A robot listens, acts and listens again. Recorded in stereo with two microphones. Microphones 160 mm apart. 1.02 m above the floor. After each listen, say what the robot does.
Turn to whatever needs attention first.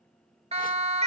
Turn 40° right.
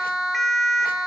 Facing the siren.